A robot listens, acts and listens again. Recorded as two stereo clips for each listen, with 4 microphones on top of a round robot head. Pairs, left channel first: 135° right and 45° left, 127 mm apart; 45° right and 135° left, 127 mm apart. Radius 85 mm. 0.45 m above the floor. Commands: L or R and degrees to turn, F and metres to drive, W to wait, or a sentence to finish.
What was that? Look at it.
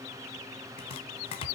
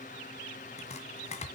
R85
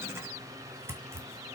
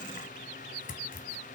R25
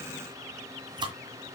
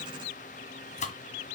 R10
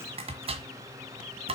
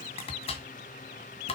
Facing the chopping, 1 to 2 m away.